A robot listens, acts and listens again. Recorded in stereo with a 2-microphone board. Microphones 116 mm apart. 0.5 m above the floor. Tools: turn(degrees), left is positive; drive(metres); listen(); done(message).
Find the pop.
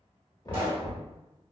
turn(degrees=-45)
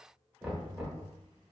listen()
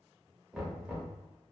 done("I heard a pop, but can't make it out now. It was about straight ahead or 90° right.")